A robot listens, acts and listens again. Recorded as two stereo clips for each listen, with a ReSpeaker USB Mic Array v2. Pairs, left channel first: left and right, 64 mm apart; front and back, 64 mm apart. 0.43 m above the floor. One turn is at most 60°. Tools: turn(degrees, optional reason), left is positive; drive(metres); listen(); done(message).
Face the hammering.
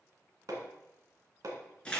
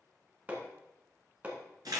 turn(degrees=-60, reason="The hammering: 115° right.")
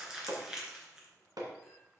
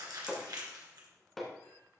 turn(degrees=-60, reason="The hammering is now 85° right.")
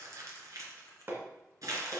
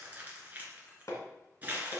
turn(degrees=-35, reason="The hammering is now 35° right.")
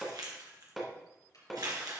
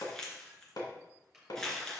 done("Found it: hammering, straight ahead.")